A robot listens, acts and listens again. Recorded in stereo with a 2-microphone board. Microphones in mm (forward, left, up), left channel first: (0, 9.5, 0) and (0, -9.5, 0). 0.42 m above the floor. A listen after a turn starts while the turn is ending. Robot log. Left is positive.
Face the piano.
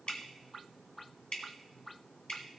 cmd idle
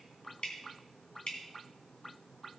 cmd idle
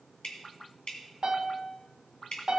note: The piano: about 55° right or 125° right.
cmd yaw -55
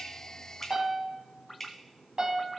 note: So it is at 65° right.
cmd yaw -65
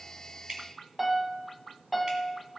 note: The piano is now 10° right.
cmd yaw -10
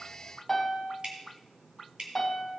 end: Found it: a piano, straight ahead.